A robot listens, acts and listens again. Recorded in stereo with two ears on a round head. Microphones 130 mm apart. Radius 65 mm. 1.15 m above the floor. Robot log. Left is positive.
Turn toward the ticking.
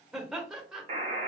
cmd idle
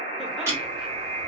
note: The ticking: about 20° right or 160° right.
cmd yaw -20
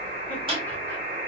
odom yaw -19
note: So it is at 140° right.
cmd yaw -140
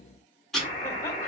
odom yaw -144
end: Found it: ticking, straight ahead, 1 to 2 m away.